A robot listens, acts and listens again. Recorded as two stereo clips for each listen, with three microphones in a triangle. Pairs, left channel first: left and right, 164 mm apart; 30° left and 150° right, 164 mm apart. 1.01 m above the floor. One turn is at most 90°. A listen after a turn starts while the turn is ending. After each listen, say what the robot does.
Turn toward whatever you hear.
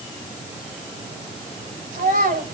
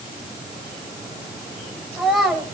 Turn 65° right.
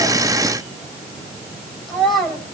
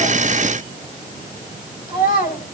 Facing the child speaking, over 4 m away.